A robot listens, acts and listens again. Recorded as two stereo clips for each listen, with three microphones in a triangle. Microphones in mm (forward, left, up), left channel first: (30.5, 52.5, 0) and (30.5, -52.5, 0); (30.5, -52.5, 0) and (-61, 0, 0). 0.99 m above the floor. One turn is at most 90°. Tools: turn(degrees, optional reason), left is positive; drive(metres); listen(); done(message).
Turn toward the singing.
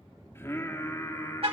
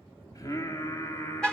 turn(degrees=30, reason="The singing: 30° left.")
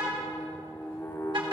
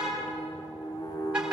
turn(degrees=25, reason="The singing is now 25° left.")
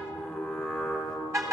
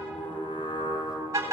turn(degrees=10, reason="The singing is now 10° left.")
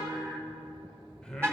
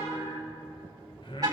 turn(degrees=10, reason="The singing is now 10° left.")
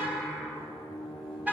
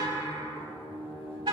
done("Facing the singing.")